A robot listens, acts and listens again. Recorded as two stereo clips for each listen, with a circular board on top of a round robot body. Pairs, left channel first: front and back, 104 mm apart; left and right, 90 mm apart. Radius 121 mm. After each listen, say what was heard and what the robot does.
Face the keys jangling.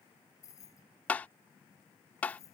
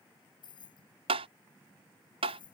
The keys jangling: 60° left. Turn 60° left.
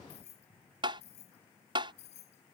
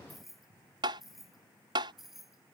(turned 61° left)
Facing the keys jangling.